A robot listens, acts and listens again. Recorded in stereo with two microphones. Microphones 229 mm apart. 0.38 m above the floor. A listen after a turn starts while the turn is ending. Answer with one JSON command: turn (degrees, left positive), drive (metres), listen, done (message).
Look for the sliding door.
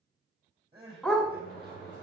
{"turn": 45}
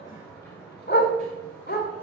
{"done": "Found it: a sliding door, straight ahead."}